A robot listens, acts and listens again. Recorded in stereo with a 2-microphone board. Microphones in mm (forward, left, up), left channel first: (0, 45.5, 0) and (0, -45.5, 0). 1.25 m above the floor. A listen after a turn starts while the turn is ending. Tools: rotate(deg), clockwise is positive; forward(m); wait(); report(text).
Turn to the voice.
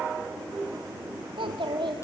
rotate(75)
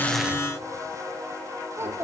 rotate(30)
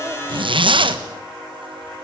wait()
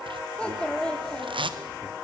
rotate(-10)
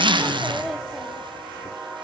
report("Found it: a child speaking, straight ahead, 1 to 2 m away.")